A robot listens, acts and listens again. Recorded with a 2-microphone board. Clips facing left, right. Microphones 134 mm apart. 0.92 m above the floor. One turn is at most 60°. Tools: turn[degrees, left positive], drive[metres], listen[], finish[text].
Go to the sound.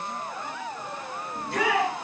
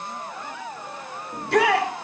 Action: turn[-60]
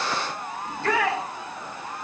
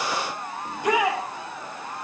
Thought: So it is at 15° right.
Action: turn[-15]
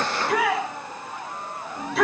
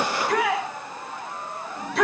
Action: drive[1.0]
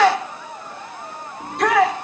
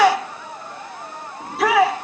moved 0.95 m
Action: drive[1.0]
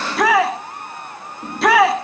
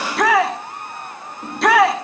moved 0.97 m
Action: drive[1.0]
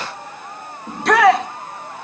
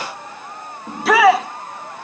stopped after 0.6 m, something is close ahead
Action: finish[Arrived at the shout, straight ahead.]